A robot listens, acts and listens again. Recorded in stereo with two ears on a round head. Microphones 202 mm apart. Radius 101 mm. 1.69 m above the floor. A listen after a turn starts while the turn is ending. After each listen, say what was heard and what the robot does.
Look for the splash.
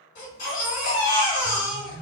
Keep listening.
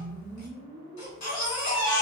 Keep listening.
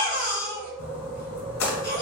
The splash: about 70° left or 110° left. Turn 70° left.
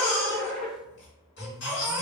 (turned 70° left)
Keep listening.
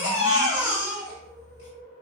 I heard a splash, but can't make it out now. It was about straight ahead or 40° left.